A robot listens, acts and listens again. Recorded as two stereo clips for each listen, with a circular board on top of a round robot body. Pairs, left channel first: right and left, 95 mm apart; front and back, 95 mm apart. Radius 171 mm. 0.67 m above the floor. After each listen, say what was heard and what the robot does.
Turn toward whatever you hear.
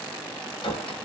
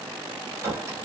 The clink: 115° right. Turn 115° right.
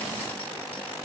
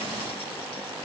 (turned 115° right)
Keep listening.
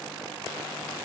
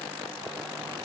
Keep listening.
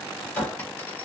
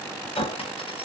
The clink is now 15° right. Turn 15° right.
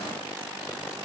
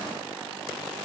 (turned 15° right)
Keep listening.
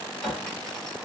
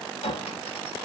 Found it: a clink, straight ahead, 1 to 2 m away.